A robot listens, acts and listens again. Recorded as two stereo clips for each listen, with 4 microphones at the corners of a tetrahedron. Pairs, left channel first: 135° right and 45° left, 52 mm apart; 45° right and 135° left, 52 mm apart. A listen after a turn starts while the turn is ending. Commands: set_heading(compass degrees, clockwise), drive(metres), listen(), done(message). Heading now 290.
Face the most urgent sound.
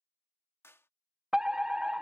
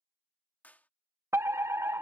set_heading(170)
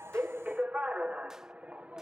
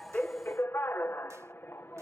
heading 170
set_heading(185)
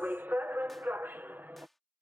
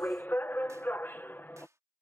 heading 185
done("Found it: a fire alarm, straight ahead.")